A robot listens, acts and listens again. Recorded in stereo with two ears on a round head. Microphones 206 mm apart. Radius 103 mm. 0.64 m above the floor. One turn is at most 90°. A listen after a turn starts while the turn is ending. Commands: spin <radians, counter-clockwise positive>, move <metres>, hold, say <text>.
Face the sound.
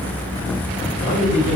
spin 1.22
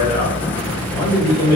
spin 0.35
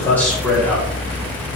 say Found it: a man speaking, straight ahead, 2 to 4 m away.